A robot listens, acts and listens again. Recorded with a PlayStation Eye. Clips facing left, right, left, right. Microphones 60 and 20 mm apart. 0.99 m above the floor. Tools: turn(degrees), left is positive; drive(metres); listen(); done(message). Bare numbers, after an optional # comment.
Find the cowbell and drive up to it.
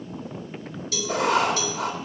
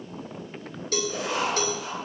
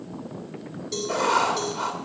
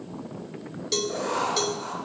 # The cowbell: about 50° right or 130° right.
turn(-50)
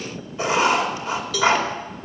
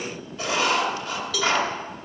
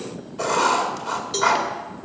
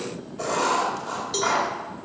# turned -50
drive(1.0)
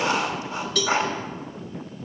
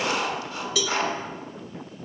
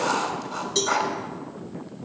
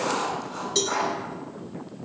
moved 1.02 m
drive(1.0)
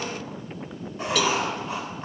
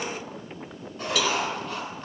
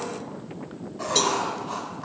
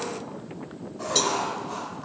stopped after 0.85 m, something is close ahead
listen()
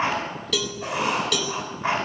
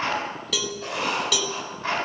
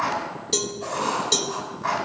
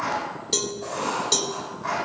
done("I am next to the cowbell.")